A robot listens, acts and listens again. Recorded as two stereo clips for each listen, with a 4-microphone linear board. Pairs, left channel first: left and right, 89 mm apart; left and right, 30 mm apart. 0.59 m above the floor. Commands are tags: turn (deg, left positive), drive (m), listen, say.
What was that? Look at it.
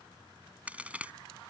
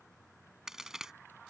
<turn deg="-15"/>
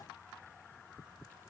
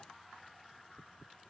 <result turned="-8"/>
<listen/>
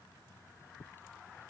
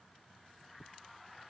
<say>I heard a crack, but can't make it out now. It was about 10° right or 155° right.</say>